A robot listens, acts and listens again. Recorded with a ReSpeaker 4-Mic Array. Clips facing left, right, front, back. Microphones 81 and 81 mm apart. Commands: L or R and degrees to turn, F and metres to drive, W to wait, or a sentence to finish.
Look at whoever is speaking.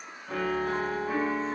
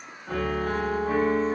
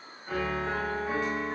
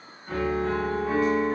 W
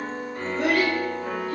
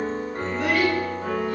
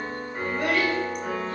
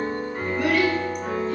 L55
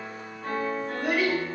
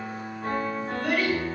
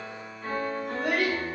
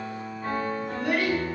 L15
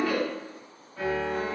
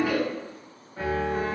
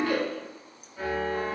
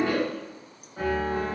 Facing the child speaking, 1 to 2 m away.